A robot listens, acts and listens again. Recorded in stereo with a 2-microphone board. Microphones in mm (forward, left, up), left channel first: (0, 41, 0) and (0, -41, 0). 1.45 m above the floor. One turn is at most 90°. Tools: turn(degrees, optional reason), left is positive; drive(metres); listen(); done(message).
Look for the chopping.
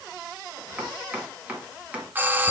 turn(degrees=-15, reason="The chopping: about 15° right or 165° right.")
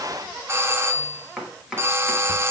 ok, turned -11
done("Facing the chopping, 1 to 2 m away.")